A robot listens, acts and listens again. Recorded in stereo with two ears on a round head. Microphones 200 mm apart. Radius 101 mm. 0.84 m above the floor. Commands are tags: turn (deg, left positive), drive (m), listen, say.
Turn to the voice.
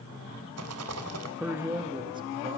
<turn deg="-20"/>
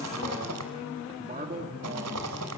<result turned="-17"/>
<turn deg="-40"/>
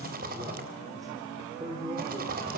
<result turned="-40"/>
<turn deg="-20"/>
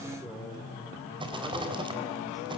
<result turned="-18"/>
<listen/>
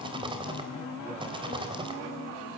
<listen/>
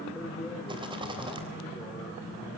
<say>Facing the man speaking.</say>